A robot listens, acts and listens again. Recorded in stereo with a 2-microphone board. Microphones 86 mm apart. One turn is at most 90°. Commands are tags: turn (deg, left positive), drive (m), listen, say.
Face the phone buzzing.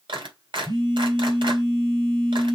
<turn deg="-60"/>
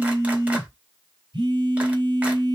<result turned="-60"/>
<turn deg="-55"/>
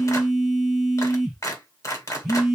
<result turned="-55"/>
<say>Found it: a phone buzzing, straight ahead, 2 to 4 m away.</say>